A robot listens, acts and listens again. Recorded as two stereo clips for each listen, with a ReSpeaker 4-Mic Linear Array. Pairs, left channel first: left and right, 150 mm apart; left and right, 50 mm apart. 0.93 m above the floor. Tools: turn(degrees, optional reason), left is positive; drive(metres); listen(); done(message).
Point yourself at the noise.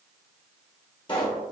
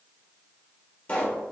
turn(degrees=35, reason="The pop: about 35° left or 145° left.")
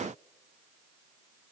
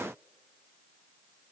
listen()
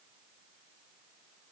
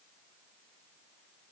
done("I heard a pop, but can't make it out now. It was about straight ahead or 110° left.")